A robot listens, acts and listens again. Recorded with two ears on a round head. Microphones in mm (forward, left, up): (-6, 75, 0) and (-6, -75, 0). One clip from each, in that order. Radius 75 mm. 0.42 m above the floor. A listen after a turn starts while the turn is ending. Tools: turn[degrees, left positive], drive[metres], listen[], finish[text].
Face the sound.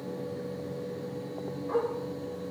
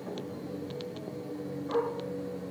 Action: turn[30]
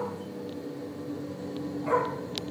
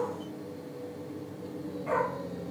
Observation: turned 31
Thought: So it is at 150° left.
Action: turn[150]
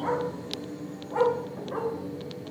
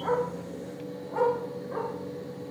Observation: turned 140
Thought: The dog barking is now 15° left.
Action: turn[15]
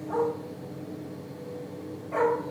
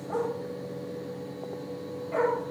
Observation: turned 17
Action: finish[Facing the dog barking.]